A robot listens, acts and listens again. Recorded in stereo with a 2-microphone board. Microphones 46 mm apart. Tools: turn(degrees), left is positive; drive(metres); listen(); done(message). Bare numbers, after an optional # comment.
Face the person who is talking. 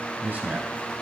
# The man speaking: about 35° right or 145° right.
turn(-35)
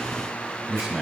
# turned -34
done("Facing the man speaking.")